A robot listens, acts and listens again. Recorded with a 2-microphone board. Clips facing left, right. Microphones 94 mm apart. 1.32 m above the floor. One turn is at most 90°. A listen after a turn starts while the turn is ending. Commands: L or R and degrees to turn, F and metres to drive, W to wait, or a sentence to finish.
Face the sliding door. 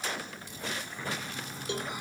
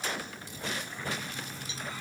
L15
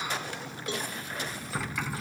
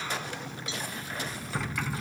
Facing the sliding door.